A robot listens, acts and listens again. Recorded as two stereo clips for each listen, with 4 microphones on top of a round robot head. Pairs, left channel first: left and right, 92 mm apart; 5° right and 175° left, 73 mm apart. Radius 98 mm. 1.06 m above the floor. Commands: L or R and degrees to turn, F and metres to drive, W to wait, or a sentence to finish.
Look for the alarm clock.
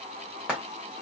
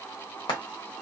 W
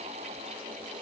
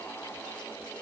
W
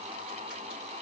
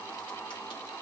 I can't make out an alarm clock, only frying.